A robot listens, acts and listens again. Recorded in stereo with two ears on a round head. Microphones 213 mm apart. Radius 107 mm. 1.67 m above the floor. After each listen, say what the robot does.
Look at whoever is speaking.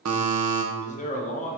Turn 30° left.
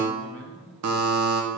Facing the man speaking, 1 to 2 m away.